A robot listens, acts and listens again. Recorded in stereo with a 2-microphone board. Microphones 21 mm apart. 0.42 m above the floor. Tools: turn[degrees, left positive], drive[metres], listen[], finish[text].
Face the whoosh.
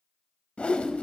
Thought: The whoosh: about 70° left or 110° left.
Action: turn[70]
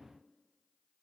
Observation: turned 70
Action: listen[]
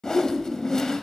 Thought: So it is at 35° left.
Action: turn[35]
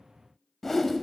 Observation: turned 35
Thought: The whoosh is now 20° left.
Action: turn[20]
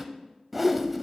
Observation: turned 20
Action: finish[Found it: a whoosh, straight ahead.]